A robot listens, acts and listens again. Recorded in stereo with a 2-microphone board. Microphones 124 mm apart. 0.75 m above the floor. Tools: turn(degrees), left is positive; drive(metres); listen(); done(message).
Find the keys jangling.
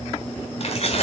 turn(degrees=55)
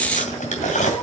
turn(degrees=85)
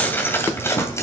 turn(degrees=25)
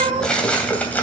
turn(degrees=15)
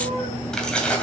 turn(degrees=10)
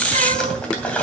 turn(degrees=10)
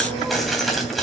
done("Facing the keys jangling, 2 to 4 m away.")